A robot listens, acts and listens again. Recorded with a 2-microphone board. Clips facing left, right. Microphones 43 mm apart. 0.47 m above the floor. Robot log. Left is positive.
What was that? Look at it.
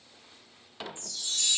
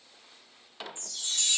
note: The chime: about 55° right or 125° right.
cmd yaw -55
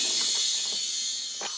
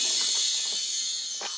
end: Facing the chime.